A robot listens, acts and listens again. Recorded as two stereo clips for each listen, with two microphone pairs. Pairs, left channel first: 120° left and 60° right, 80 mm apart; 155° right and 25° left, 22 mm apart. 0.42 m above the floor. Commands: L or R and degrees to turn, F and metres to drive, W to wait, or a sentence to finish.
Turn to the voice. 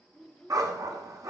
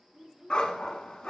L35
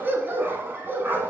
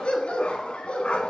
W
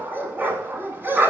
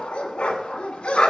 W
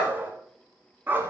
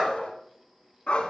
I heard a child speaking from this way, but can't make it out now.